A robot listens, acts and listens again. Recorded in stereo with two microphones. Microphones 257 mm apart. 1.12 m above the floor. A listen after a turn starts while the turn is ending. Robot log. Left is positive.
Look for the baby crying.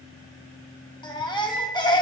note: The baby crying: about 15° left or 165° left.
cmd yaw +15
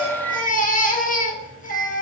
note: So it is at 150° left.
cmd yaw +150
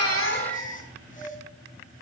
note: The baby crying is now 30° left.
cmd yaw +30
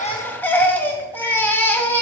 end: Found it: a baby crying, straight ahead.